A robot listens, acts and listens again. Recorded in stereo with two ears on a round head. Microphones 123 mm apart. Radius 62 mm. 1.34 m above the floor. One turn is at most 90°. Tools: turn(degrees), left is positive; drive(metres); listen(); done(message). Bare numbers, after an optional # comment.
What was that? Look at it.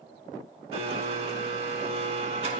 # The blender: about 45° right or 135° right.
turn(-45)
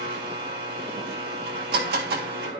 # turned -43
# So it is at 90° right.
turn(-90)
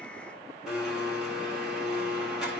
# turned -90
done("Found it: a blender, straight ahead, 1 to 2 m away.")